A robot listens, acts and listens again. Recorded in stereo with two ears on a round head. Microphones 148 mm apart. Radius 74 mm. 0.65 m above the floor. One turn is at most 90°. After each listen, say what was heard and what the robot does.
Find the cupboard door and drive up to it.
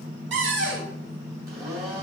The cupboard door: about 75° right or 105° right. Turn 75° right.
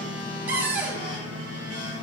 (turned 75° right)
So it is at 10° right. Turn 10° right.
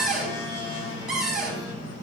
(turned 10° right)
Drive 1.0 m forward.
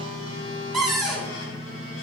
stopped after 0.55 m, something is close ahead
Blocked. The cupboard door is further on, straight ahead.